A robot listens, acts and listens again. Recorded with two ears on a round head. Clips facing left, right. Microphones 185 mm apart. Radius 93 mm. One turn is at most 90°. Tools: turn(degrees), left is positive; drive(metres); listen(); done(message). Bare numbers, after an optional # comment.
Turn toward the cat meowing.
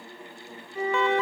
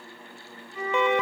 listen()
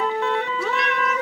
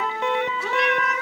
# The cat meowing: about 70° left or 110° left.
turn(70)
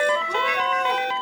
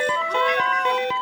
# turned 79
# So it is at 10° left.
turn(10)
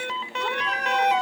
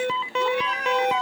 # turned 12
listen()
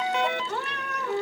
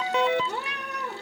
# The cat meowing is now 10° right.
turn(-10)
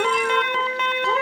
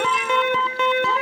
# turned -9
listen()
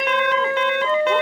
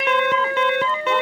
listen()
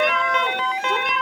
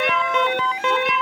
done("I heard a cat meowing from this way, but can't make it out now.")